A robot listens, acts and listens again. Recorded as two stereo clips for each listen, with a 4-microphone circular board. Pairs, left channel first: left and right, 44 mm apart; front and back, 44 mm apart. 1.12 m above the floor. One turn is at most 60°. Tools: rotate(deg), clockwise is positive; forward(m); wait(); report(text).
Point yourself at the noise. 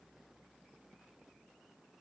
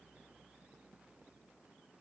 wait()
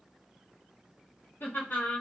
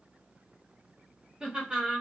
rotate(-60)
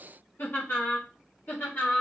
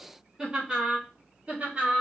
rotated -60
rotate(-60)
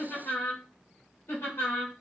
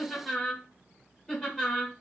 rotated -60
rotate(-60)
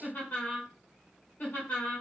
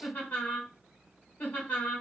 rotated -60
rotate(-35)
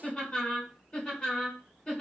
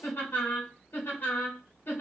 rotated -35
rotate(-10)
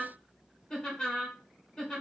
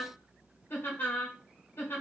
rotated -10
report("Facing the laughter, 1 to 2 m away.")